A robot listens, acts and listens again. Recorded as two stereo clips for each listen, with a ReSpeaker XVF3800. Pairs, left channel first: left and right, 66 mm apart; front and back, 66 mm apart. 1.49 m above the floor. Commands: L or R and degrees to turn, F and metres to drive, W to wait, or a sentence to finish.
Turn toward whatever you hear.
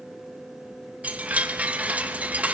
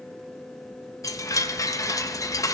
R20
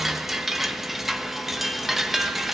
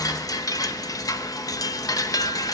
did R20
Facing the chime.